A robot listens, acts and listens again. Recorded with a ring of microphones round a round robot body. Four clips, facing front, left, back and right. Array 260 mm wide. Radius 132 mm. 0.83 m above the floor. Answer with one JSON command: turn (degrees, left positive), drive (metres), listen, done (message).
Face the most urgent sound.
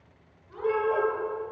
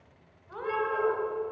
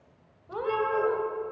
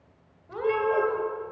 {"turn": -50}
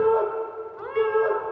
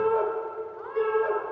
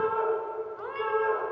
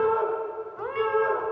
{"turn": 25}
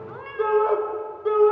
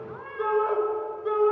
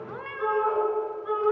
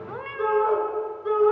{"done": "Facing the shout, over 4 m away."}